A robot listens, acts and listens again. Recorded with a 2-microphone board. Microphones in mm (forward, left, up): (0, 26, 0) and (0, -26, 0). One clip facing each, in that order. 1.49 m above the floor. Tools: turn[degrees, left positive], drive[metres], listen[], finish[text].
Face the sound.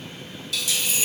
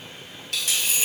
Thought: The dropped coin: about 55° right or 125° right.
Action: turn[-55]
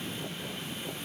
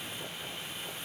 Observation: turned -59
Action: listen[]
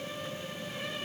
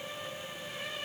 Action: finish[I heard a dropped coin, but can't make it out now. It was about 5° left or 65° right.]